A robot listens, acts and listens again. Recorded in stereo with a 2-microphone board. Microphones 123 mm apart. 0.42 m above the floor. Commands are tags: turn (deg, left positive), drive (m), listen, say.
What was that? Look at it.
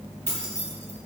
<turn deg="-65"/>
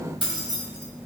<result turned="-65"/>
<turn deg="-45"/>
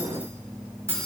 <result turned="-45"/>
<turn deg="-25"/>
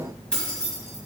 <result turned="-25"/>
<say>Facing the keys jangling, 2 to 4 m away.</say>